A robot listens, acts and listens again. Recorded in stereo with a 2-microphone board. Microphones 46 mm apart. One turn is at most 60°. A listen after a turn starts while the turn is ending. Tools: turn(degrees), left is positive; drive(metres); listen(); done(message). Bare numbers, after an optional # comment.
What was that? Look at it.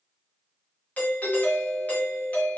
# The doorbell: about 35° left or 145° left.
turn(35)
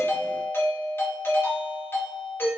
# So it is at 105° left.
turn(60)
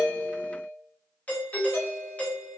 # The doorbell is now 40° left.
turn(40)
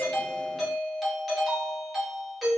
done("Facing the doorbell, 1 to 2 m away.")